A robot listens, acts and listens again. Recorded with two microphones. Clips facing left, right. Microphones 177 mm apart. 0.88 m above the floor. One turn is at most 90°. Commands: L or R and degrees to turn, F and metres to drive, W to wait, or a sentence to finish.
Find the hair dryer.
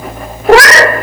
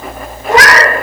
W
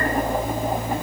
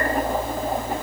W
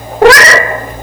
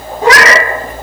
I can't make out a hair dryer, only a cat meowing.